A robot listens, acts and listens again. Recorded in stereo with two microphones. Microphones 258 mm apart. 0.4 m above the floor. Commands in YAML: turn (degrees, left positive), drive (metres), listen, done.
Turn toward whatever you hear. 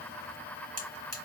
turn: -35
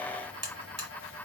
turn: -110
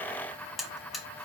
done: "Facing the buzzer."